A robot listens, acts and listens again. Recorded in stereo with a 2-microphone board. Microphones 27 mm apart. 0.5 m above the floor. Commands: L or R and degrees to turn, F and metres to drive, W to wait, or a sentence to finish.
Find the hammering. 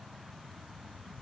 W
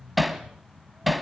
R30
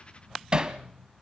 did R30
R145
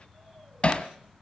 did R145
L50
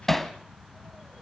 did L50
L15
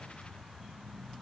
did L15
W
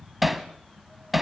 Found it: hammering, straight ahead, 1 to 2 m away.